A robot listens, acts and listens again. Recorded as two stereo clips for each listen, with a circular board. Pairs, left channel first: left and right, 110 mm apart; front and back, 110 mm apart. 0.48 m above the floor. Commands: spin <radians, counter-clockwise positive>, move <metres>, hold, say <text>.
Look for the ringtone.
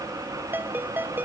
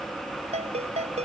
spin -2.88
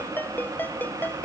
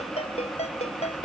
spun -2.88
spin 0.26
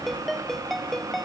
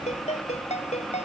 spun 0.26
say Facing the ringtone.